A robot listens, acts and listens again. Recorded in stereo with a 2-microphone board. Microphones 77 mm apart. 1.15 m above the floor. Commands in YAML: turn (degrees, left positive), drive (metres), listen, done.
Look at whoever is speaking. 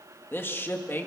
turn: 30
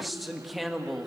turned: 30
done: "Facing the man speaking, 2 to 4 m away."